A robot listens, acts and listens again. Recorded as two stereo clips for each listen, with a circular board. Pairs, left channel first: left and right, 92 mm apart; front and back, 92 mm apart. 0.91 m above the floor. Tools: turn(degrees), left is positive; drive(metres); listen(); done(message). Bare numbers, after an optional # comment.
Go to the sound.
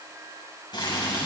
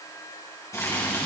# The boiling: 55° left.
turn(55)
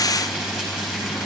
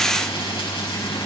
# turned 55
# The boiling is now 10° right.
turn(-10)
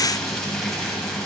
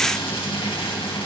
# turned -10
drive(1.0)
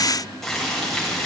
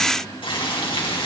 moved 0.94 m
drive(1.0)
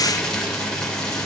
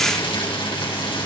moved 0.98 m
# The boiling is now 10° left.
turn(10)
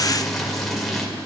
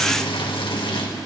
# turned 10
drive(1.0)
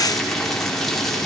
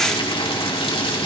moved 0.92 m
drive(1.0)
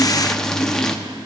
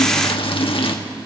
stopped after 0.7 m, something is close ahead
done("Arrived at the boiling, straight ahead.")